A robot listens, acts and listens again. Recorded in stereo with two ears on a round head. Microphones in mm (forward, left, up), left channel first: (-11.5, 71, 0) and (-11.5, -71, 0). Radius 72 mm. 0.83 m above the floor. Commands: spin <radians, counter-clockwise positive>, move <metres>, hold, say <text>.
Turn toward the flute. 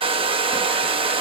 hold
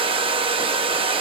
hold
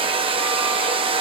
say I can't make out a flute, only a hair dryer.